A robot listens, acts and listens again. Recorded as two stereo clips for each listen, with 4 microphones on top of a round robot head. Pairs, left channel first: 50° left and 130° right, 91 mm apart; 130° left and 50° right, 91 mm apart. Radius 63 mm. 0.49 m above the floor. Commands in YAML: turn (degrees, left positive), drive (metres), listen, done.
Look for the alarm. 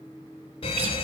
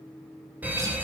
turn: 25
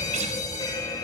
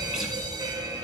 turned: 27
done: "Facing the alarm, 1 to 2 m away."